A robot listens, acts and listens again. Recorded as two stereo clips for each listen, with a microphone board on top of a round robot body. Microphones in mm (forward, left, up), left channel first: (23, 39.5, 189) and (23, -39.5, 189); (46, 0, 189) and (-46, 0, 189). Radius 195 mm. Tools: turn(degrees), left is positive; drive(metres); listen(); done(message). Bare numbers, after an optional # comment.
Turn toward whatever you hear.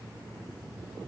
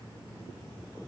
listen()
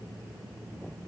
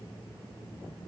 listen()
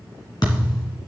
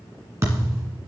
# The thud: 125° left.
turn(125)
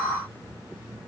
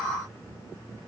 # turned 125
done("I heard a thud from this way, but can't make it out now.")